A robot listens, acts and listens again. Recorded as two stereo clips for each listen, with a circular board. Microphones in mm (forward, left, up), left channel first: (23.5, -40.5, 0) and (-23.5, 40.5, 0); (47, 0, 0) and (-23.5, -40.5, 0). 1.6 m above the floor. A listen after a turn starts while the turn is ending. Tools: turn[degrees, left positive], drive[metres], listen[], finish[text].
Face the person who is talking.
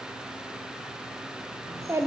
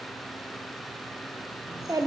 Thought: The child speaking: 175° left.
Action: turn[175]
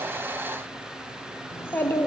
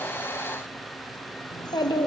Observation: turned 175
Action: finish[Found it: a child speaking, straight ahead, under 1 m away.]